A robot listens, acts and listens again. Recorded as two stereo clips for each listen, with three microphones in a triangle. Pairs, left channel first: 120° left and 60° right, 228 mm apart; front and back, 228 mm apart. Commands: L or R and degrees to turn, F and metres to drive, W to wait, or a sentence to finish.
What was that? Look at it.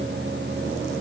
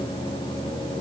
W
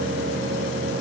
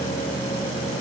W
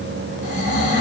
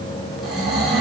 R90
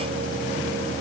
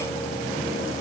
W
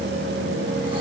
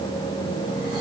W
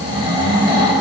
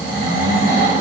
Facing the snoring.